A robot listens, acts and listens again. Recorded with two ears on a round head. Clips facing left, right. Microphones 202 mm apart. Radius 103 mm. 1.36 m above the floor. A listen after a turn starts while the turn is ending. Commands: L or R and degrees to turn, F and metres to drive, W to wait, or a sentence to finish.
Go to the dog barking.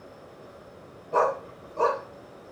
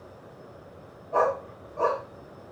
L50
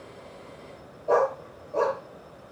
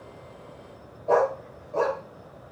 F1.0
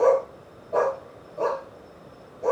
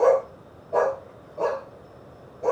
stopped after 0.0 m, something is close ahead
Something is in my way. I am facing the dog barking but have not reached it.